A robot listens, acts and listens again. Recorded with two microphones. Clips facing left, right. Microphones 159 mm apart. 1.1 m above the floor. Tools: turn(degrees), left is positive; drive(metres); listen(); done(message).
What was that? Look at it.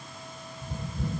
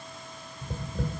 turn(degrees=-90)
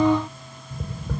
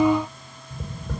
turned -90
done("Facing the tapping.")